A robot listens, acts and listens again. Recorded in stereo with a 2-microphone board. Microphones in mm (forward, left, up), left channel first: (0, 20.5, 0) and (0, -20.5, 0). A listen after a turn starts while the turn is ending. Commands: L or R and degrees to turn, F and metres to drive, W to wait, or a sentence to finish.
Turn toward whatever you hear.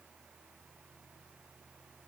W
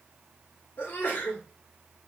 L65
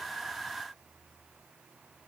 W
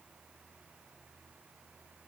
I heard a sneeze, but can't make it out now. It was about straight ahead or 50° left.